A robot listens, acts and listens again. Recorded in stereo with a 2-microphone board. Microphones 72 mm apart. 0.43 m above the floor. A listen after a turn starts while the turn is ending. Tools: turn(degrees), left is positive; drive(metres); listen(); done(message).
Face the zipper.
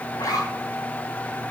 turn(degrees=90)
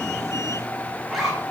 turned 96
done("Found it: a zipper, straight ahead, over 4 m away.")